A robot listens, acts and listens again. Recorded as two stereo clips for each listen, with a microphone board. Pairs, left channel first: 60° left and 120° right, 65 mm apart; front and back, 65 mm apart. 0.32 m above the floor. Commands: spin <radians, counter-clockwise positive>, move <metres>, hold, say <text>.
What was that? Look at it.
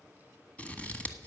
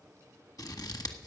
say Found it: scissors, straight ahead, 1 to 2 m away.